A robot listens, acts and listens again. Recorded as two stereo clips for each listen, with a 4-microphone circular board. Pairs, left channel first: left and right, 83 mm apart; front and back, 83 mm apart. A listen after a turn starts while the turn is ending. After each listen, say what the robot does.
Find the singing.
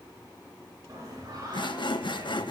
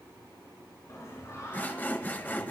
Turn 55° right.
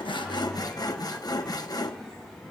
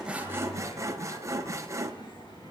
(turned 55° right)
Facing the singing.